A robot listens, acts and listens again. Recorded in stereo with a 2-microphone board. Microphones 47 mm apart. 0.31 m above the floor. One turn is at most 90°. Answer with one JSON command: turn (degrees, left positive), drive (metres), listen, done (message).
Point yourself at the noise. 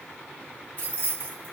{"turn": 30}
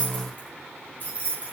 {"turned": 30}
{"turn": 35}
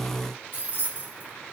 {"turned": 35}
{"turn": 40}
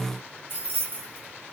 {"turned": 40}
{"turn": 90}
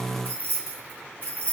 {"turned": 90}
{"turn": 30}
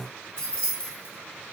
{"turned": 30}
{"turn": 20}
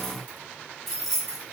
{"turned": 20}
{"done": "Found it: keys jangling, straight ahead, 1 to 2 m away."}